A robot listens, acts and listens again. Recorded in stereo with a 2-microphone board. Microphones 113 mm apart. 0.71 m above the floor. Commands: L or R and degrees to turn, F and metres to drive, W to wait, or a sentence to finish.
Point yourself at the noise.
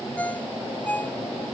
L30
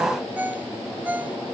R15
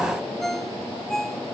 Found it: a ringtone, straight ahead.